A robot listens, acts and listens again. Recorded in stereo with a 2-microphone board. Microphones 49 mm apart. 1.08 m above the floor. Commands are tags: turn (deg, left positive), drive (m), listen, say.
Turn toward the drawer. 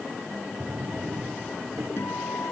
<turn deg="-45"/>
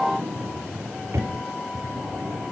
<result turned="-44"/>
<turn deg="-90"/>
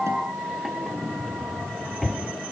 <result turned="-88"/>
<say>Facing the drawer.</say>